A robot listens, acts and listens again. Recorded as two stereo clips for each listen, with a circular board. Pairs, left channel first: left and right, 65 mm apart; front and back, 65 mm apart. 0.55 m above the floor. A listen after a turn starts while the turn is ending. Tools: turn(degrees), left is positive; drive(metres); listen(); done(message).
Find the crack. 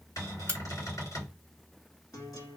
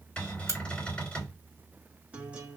turn(degrees=155)
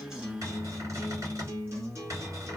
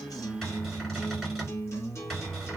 done("Facing where the crack came from. I can't hear it now.")